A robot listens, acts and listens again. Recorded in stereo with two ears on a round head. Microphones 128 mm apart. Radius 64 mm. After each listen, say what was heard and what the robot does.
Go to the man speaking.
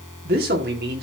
Turn 90° right.
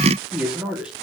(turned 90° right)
Drive 1.0 m forward.
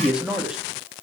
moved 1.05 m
Drive 1.0 m forward.
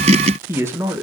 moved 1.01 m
The man speaking is now 20° right. Turn 20° right.
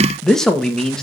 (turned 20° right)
Drive 1.0 m forward.
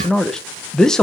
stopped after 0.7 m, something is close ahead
Arrived at the man speaking, straight ahead.